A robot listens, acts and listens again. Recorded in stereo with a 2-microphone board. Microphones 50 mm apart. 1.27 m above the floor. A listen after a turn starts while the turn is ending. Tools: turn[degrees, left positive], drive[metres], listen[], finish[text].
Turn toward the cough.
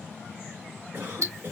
Thought: The cough: about 35° right or 145° right.
Action: turn[-35]
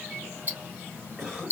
Action: finish[Found it: a cough, straight ahead.]